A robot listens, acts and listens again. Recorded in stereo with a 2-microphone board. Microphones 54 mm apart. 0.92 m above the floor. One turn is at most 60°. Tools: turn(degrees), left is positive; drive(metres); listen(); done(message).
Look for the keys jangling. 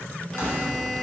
turn(degrees=60)
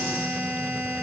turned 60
listen()
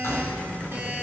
turn(degrees=60)
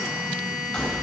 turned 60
turn(degrees=20)
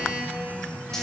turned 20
listen()
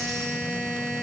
listen()
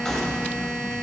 turn(degrees=10)
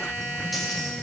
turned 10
listen()
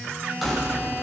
done("Found it: keys jangling, straight ahead.")